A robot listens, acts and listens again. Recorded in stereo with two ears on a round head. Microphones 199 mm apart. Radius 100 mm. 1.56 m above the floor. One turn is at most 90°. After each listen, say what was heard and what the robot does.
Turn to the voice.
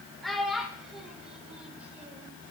Turn 30° right.
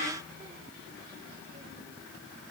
Keep listening.
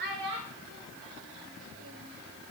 So it is at 125° right. Turn 90° right.
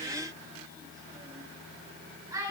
The child speaking is now 15° right. Turn 15° right.
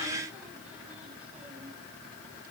Keep listening.
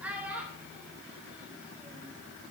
The child speaking is now 10° right. Turn 10° right.
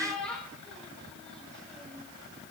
Found it: a child speaking, straight ahead.